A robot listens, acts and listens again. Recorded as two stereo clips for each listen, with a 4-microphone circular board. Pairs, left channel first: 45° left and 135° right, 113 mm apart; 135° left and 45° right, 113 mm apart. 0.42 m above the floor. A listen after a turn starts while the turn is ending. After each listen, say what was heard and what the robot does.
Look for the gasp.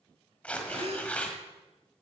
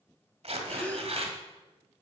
The gasp: 150° right. Turn 150° right.
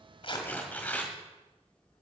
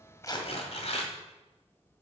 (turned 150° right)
Facing where the gasp came from. I can't hear it now.